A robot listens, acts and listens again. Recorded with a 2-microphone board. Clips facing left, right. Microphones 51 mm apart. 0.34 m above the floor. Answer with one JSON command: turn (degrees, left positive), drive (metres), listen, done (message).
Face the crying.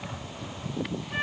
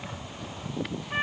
{"listen": true}
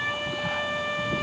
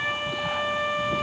{"listen": true}
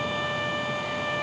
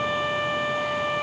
{"done": "I can't make out crying to turn to."}